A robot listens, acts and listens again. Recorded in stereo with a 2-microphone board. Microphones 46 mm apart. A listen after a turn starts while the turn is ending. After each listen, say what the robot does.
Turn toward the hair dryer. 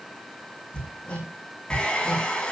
Turn 20° left.
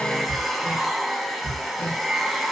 Found it: a hair dryer, straight ahead, 2 to 4 m away.